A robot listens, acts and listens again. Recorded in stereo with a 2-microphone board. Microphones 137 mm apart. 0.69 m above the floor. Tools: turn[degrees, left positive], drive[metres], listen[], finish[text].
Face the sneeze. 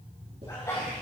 Thought: The sneeze: about 25° left or 155° left.
Action: turn[25]
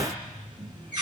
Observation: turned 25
Action: listen[]
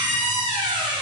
Action: finish[I heard a sneeze, but can't make it out now. It was about straight ahead or 130° left.]